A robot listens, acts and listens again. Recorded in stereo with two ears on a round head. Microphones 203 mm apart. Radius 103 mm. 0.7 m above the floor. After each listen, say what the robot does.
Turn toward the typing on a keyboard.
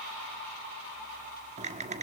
Turn 30° right.
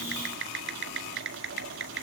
Turn 115° right.
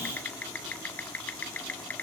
Turn 10° left.
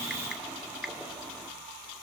Facing the typing on a keyboard, 1 to 2 m away.